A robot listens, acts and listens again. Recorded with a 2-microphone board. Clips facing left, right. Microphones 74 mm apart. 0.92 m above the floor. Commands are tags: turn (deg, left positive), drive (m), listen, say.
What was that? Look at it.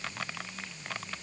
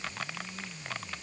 <listen/>
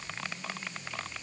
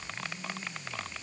<listen/>
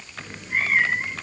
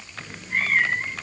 <turn deg="30"/>
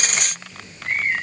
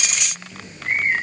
<turn deg="-20"/>
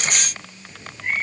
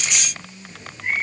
<say>Found it: a cat meowing, straight ahead.</say>